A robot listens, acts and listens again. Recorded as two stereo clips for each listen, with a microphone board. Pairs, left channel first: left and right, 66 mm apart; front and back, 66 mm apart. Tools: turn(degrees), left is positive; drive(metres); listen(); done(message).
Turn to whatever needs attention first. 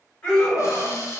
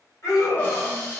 turn(degrees=15)
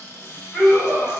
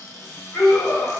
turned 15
done("Facing the scream.")